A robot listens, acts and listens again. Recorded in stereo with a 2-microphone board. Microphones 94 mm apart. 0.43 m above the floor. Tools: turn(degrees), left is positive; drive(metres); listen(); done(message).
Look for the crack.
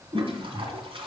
listen()
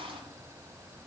listen()
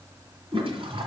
done("I can't make out a crack to turn to.")